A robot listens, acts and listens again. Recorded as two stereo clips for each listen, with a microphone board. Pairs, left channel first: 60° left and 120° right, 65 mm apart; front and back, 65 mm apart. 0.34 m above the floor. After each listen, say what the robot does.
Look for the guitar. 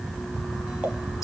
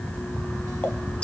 Keep listening.
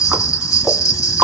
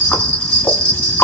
Keep listening.
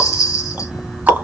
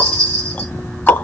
I can't make out a guitar, only ticking and a bell.